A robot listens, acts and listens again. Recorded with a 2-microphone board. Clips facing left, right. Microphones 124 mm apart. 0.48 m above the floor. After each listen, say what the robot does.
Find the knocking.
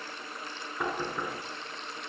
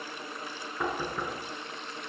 Turn 30° left.
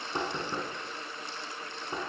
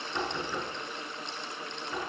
Turn 150° left.
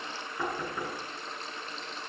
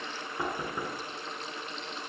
Turn 15° right.
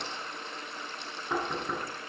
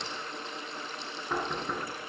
Found it: knocking, straight ahead, over 4 m away.